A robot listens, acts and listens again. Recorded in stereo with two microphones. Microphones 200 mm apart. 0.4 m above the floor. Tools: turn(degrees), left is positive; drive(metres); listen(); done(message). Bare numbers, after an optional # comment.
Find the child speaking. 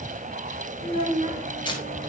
# The child speaking: about 30° right or 150° right.
turn(-30)
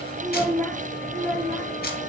# So it is at 15° left.
turn(15)
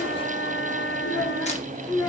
# The child speaking is now 15° left.
turn(15)
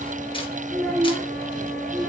# The child speaking is now 10° left.
turn(10)
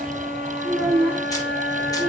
done("Facing the child speaking.")